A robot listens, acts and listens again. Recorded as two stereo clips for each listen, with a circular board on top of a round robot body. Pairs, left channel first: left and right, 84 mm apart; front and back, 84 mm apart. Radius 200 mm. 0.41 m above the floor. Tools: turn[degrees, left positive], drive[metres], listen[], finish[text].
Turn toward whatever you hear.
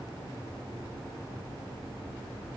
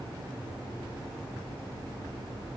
Action: listen[]
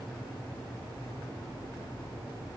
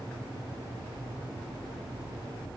Action: listen[]
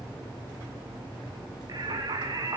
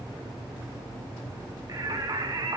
Thought: The singing: 135° right.
Action: turn[-135]
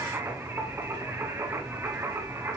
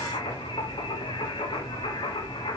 Thought: The singing is now 25° right.
Action: turn[-25]
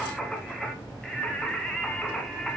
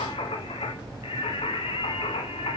Action: finish[Facing the singing, 1 to 2 m away.]